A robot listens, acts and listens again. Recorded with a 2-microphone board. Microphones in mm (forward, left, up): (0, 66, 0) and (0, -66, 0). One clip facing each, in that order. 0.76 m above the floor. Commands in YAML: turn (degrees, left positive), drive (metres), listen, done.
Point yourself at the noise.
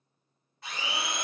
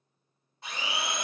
turn: -25
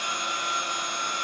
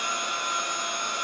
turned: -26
turn: -130
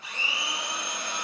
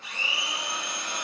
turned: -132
done: "Found it: a blender, straight ahead, 1 to 2 m away."